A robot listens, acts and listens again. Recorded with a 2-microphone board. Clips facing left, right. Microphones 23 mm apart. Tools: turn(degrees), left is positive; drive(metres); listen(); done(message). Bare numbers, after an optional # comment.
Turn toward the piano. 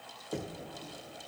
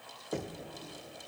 listen()
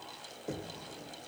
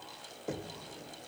listen()
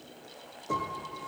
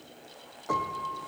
# The piano: about 60° right or 120° right.
turn(-60)
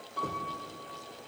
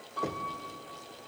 done("Facing the piano.")